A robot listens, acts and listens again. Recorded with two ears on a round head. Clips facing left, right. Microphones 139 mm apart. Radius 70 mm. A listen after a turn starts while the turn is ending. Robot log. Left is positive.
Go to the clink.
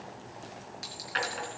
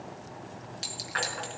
note: The clink: about 35° right or 145° right.
cmd yaw -35
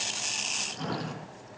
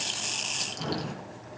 cmd idle
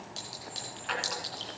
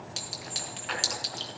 note: So it is at 110° right.
cmd yaw -110
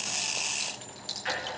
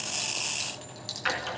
note: The clink is now 10° right.
cmd yaw -10
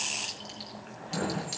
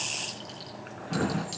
cmd fwd 1.0
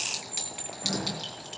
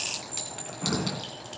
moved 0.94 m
cmd fwd 1.0
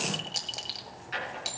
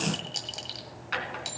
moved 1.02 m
cmd fwd 1.0
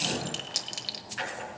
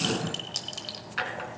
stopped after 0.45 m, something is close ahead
note: The clink is now 10° left.
cmd yaw +10
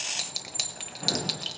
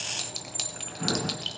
end: Arrived at the clink, straight ahead.